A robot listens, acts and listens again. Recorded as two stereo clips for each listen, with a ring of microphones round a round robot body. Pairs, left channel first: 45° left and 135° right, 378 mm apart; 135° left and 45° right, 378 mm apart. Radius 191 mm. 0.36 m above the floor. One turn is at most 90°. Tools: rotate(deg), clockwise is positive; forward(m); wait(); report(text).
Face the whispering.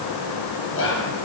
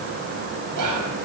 rotate(10)
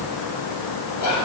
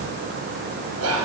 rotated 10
report("Found it: whispering, straight ahead, 2 to 4 m away.")